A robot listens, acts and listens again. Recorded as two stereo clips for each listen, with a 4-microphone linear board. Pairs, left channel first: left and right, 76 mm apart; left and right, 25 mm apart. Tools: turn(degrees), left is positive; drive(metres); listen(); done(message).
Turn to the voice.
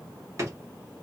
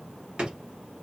listen()
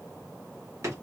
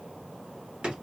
listen()
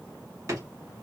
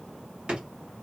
done("I can't make out anyone speaking to turn to.")